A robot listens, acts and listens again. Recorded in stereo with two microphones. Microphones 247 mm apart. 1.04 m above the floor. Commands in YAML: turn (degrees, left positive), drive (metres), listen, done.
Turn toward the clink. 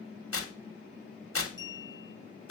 turn: -50
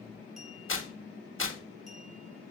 listen: true
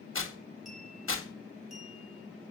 listen: true
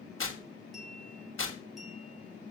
done: "Facing the clink."